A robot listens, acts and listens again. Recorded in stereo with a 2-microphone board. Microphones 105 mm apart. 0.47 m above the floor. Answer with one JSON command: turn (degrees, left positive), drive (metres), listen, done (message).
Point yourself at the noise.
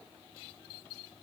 {"listen": true}
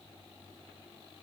{"listen": true}
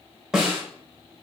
{"turn": -30}
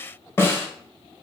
{"turn": 25}
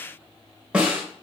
{"turn": -10}
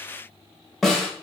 {"done": "Facing the snare drum."}